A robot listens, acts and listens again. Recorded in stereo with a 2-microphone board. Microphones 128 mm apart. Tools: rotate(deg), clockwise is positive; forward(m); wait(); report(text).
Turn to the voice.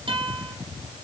wait()
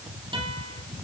wait()
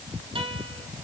report("I can't make out anyone speaking to turn to.")